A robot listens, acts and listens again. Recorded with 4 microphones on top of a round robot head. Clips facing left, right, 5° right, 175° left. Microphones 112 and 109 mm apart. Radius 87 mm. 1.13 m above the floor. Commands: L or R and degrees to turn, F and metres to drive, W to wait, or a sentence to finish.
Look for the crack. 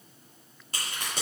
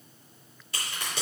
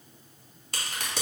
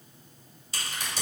L30
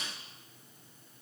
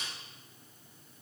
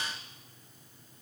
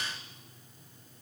I heard a crack from this way, but can't make it out now.